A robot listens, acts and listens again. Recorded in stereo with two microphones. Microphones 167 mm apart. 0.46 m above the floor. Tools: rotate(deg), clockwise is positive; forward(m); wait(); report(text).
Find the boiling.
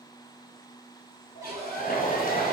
rotate(-65)
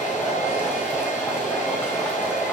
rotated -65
rotate(-15)
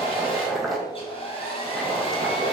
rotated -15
report("Found it: boiling, straight ahead.")